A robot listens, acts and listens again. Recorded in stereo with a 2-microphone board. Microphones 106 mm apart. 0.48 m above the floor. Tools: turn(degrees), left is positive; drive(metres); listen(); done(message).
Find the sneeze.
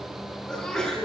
turn(degrees=30)
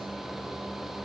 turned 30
listen()
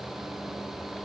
done("I heard a sneeze, but can't make it out now. It was about 25° right or 145° left.")